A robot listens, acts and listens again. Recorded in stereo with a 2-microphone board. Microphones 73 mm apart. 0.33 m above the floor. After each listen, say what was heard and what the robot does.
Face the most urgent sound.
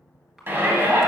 The shout: about 30° right or 150° right. Turn 30° right.
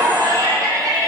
So it is at 115° right. Turn 115° right.
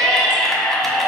Found it: a shout, straight ahead, 1 to 2 m away.